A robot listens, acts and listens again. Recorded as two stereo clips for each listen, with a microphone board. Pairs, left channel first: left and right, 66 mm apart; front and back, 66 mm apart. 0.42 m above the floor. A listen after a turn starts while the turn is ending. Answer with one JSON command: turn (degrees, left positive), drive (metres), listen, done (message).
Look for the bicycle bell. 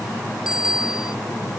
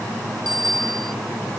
{"turn": -170}
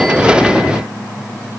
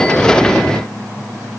{"listen": true}
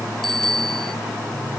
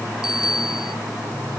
{"done": "Facing the bicycle bell."}